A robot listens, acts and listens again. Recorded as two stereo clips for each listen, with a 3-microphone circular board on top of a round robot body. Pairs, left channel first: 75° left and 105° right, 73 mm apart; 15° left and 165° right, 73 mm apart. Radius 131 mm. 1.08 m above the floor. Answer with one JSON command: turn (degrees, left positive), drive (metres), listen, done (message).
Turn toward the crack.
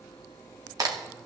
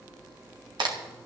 {"turn": -145}
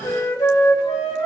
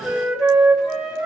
{"done": "I heard a crack from this way, but can't make it out now."}